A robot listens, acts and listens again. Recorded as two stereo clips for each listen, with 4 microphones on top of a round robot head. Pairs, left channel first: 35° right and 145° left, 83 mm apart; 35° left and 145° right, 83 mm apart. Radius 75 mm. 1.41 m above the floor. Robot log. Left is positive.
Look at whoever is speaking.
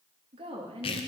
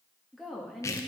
note: The woman speaking: 125° left.
cmd yaw +125
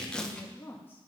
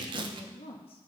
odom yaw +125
note: The woman speaking is now 35° left.
cmd yaw +35
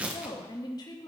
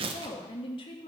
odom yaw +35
note: The woman speaking is now 10° left.
cmd yaw +10
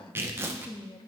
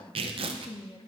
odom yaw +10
end: Found it: a woman speaking, straight ahead, 1 to 2 m away.